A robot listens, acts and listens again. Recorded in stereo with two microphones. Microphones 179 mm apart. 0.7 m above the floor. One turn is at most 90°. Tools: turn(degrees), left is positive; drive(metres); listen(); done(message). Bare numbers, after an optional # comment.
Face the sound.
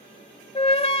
# The flute: about 30° left or 150° left.
turn(30)
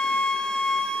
done("Found it: a flute, straight ahead, under 1 m away.")